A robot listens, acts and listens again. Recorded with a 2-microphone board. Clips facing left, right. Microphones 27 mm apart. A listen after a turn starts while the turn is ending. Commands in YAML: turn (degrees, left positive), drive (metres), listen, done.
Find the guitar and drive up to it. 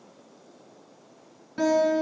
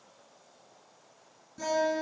turn: 70
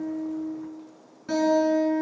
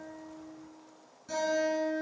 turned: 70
turn: 40
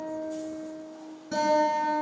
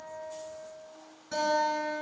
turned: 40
drive: 1.0
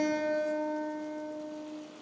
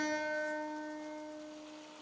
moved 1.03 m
drive: 1.0
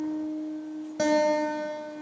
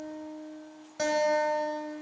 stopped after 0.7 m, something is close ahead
done: "I am next to the guitar."